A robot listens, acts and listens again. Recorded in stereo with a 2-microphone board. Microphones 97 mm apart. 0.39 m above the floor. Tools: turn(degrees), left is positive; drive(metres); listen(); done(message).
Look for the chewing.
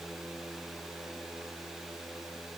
listen()
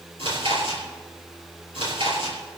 turn(degrees=-70)
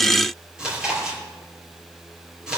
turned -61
turn(degrees=-10)
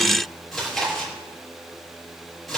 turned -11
done("Found it: chewing, straight ahead.")